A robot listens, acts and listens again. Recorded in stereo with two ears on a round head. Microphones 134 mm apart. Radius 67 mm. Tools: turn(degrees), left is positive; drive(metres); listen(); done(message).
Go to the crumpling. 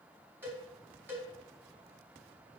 listen()
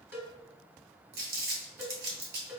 turn(degrees=-75)
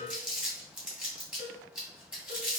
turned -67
drive(metres=1.0)
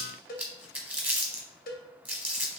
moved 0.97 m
turn(degrees=-10)
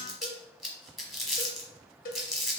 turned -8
drive(metres=1.0)
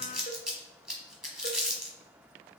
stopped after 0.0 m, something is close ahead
done("Arrived at the crumpling, straight ahead.")